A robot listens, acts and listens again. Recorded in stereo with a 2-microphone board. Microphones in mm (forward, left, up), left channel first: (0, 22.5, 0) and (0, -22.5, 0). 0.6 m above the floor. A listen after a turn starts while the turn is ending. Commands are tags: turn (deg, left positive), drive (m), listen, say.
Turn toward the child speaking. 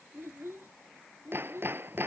<turn deg="-65"/>
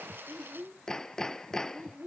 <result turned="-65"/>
<turn deg="-40"/>
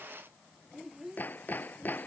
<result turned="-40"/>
<turn deg="-10"/>
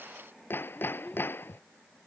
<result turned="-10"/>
<say>Facing the child speaking.</say>